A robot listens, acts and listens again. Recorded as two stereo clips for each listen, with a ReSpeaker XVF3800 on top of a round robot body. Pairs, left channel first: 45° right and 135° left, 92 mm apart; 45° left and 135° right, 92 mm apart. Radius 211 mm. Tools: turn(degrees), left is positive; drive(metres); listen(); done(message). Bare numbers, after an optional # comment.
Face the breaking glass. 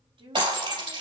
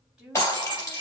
# The breaking glass: 110° left.
turn(110)
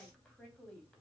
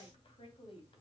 done("Facing where the breaking glass came from. I can't hear it now.")